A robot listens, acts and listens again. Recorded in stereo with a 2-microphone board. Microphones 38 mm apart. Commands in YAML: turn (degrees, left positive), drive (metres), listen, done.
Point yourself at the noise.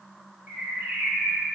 turn: -60
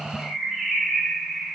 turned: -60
turn: -10
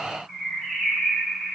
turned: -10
done: "Facing the bird."